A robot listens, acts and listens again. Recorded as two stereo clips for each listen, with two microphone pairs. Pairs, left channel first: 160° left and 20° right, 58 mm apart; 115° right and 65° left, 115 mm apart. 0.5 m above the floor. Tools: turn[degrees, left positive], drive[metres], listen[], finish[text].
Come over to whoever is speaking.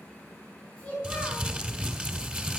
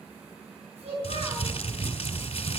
Thought: The child speaking: 85° left.
Action: turn[85]
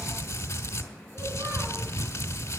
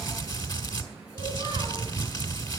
Action: listen[]
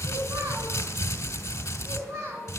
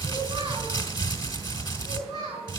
Thought: The child speaking is now 10° left.
Action: turn[10]
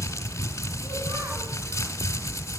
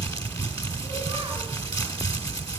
Action: listen[]
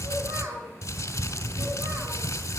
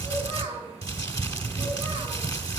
Action: drive[1.0]
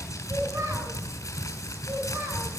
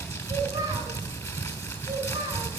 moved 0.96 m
Action: drive[1.0]
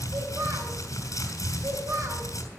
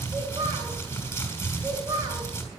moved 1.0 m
Action: drive[1.0]
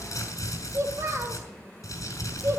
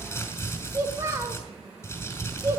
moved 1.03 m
Action: drive[1.0]
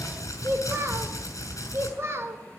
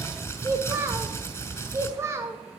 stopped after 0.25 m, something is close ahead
Action: finish[I am next to the child speaking.]